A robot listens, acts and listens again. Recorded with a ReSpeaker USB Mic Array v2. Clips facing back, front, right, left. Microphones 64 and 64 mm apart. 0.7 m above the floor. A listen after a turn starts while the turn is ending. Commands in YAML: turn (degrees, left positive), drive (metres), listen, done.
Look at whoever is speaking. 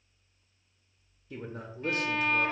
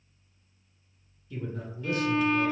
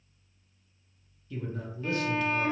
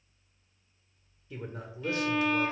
turn: 150
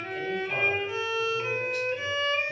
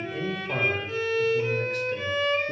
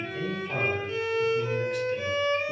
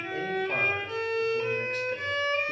turn: 40
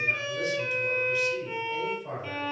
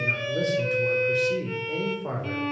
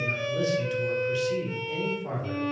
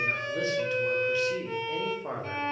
turn: 35
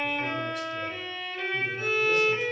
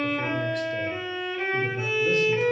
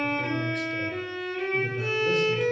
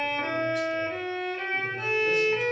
listen: true
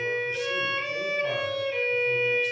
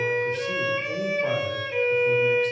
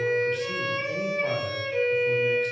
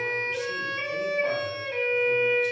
listen: true
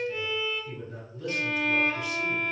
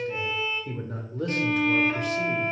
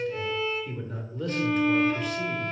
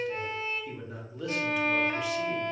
done: "Found it: a man speaking, straight ahead, under 1 m away."